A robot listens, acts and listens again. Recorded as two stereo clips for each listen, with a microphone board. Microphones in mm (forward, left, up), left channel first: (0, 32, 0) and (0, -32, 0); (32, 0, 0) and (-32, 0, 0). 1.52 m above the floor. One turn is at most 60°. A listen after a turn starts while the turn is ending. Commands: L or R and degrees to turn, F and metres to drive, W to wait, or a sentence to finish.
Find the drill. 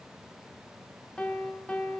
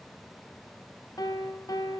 W
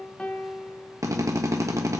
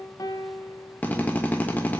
R60
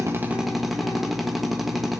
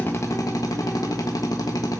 Facing the drill, 1 to 2 m away.